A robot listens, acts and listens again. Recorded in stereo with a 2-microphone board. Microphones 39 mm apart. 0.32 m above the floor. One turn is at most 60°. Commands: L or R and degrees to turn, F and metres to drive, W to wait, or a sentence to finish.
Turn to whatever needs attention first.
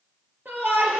R60
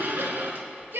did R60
R60
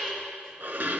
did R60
Found it: a shout, straight ahead.